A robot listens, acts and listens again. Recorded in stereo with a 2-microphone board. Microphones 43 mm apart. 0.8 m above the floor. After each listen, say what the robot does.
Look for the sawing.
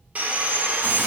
Turn 35° right.
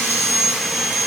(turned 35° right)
Found it: sawing, straight ahead, under 1 m away.